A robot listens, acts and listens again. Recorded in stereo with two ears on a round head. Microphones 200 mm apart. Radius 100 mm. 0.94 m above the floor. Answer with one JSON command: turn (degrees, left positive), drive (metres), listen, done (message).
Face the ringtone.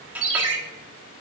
{"turn": -55}
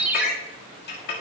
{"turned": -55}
{"done": "Facing the ringtone, 1 to 2 m away."}